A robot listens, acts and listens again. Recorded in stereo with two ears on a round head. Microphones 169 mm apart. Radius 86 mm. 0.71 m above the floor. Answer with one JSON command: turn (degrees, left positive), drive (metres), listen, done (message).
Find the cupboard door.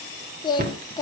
{"turn": -50}
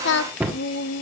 {"turn": -10}
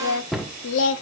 {"done": "Found it: a cupboard door, straight ahead."}